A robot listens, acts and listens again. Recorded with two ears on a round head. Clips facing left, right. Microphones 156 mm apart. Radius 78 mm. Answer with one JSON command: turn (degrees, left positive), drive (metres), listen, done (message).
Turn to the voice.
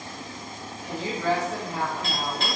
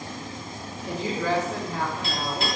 {"turn": -90}
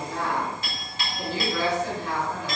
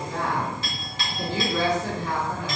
{"turn": -20}
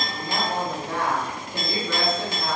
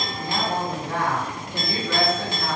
{"done": "Found it: a woman speaking, straight ahead, under 1 m away."}